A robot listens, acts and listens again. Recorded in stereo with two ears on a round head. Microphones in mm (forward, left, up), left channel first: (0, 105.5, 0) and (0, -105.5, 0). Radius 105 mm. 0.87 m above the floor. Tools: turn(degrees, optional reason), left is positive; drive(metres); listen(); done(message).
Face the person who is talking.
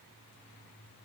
listen()
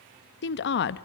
turn(degrees=50, reason="The woman speaking: about 50° left or 130° left.")
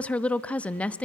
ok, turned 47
done("Facing the woman speaking.")